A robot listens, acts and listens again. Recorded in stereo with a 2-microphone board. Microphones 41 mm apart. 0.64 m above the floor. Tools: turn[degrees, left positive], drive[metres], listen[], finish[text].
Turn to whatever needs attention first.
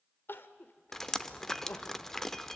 Thought: The crying: about 60° left or 120° left.
Action: turn[60]
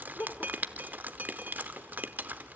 Thought: So it is at 60° left.
Action: turn[60]
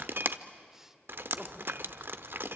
Action: listen[]
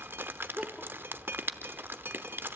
Thought: The crying is now 10° right.
Action: turn[-10]
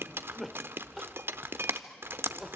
Action: finish[Found it: crying, straight ahead, 1 to 2 m away.]